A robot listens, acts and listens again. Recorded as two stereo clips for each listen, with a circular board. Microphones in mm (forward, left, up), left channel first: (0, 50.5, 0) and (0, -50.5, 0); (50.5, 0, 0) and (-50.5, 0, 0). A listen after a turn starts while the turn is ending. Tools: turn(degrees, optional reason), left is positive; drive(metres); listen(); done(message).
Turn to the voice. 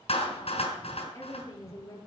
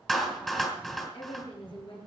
turn(degrees=35, reason="The woman speaking: 35° left.")
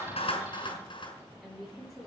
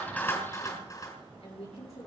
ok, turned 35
done("Found it: a woman speaking, straight ahead, over 4 m away.")